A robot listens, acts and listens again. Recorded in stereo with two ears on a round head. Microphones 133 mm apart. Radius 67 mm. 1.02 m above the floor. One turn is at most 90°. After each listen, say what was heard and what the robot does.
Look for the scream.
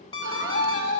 The scream: about 60° left or 120° left. Turn 60° left.
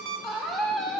Facing the scream, 2 to 4 m away.